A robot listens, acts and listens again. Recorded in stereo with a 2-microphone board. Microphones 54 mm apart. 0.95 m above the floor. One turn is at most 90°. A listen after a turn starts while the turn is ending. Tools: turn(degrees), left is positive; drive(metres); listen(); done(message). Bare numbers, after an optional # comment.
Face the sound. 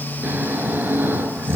# The snoring: about 35° right or 145° right.
turn(-35)
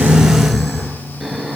done("Found it: snoring, straight ahead.")